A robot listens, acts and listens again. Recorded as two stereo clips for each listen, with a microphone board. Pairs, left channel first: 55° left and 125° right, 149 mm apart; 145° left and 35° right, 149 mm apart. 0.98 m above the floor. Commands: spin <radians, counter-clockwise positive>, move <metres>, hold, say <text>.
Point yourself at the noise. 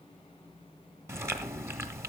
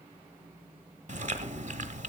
spin -0.96
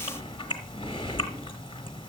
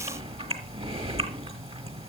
say Found it: chewing, straight ahead, 1 to 2 m away.